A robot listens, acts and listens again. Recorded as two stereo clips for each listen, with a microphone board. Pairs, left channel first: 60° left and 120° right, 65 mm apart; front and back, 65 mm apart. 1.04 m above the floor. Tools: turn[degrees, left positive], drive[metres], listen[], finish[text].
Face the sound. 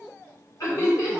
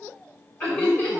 Thought: The laughter: 60° left.
Action: turn[60]
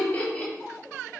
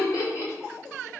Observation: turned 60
Action: finish[Found it: laughter, straight ahead, 1 to 2 m away.]